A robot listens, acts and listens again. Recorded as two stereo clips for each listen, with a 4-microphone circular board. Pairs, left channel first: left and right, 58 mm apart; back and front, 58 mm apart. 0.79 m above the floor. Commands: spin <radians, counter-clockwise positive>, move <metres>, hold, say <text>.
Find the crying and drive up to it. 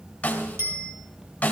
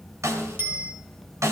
hold
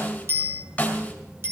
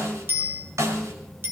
hold
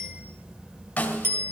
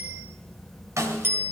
say I can't make out crying, only a snare drum and a bicycle bell.